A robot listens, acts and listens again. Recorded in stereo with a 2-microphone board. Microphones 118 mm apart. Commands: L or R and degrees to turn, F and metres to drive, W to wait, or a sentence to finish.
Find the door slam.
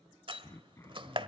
R45
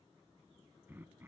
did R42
W
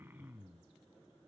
I heard a door slam, but can't make it out now. It was about 5° right or 90° right.